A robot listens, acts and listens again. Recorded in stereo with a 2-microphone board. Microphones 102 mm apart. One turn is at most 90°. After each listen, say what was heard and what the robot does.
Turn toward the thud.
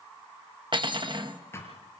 The thud: about 25° left or 155° left. Turn 25° left.
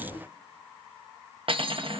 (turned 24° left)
Keep listening.
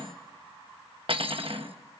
I heard a thud, but can't make it out now. It was about straight ahead or 130° left.